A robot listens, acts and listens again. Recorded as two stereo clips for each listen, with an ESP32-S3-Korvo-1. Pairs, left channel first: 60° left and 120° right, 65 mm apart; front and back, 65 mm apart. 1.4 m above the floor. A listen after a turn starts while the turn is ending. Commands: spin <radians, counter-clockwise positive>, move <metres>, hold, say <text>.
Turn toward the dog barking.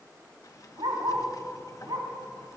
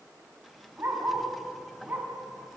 spin -2.18
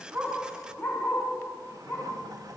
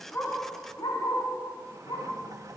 say Found it: a dog barking, straight ahead.